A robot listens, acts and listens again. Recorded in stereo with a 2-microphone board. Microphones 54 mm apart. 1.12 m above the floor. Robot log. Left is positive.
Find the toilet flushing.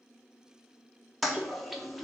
cmd yaw +30
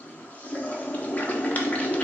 note: So it is at 145° left.
cmd yaw +145
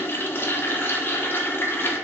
note: The toilet flushing is now 50° left.
cmd yaw +50
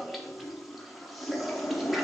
end: Facing the toilet flushing, 1 to 2 m away.